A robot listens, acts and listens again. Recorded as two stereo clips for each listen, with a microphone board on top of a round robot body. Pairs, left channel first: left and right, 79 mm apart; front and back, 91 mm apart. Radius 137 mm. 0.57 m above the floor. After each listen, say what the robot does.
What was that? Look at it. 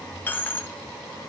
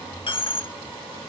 Turn 25° left.
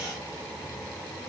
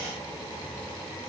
I heard a dropped coin from this way, but can't make it out now.